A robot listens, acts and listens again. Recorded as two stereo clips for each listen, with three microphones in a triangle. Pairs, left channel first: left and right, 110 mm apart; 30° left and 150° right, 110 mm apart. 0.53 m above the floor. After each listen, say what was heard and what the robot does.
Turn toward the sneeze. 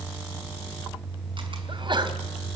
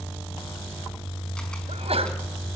The sneeze: 130° right. Turn 130° right.
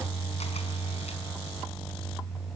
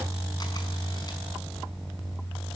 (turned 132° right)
I heard a sneeze from this way, but can't make it out now.